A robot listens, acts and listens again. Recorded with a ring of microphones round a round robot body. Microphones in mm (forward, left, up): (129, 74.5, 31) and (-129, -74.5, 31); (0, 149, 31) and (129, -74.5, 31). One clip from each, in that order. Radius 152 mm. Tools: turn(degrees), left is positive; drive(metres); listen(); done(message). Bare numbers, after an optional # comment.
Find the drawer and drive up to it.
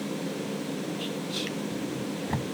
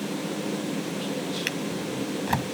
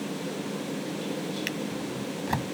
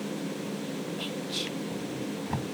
# The drawer: 175° left.
turn(175)
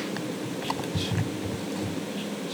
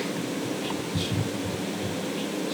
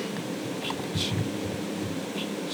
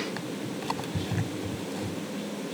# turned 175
# The drawer is now 15° right.
turn(-15)
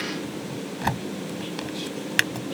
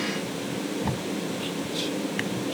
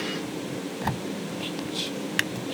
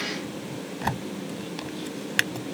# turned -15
drive(1.0)
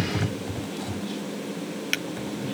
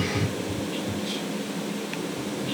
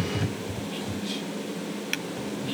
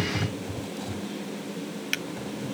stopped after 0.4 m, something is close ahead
done("Blocked. The drawer is further on, straight ahead.")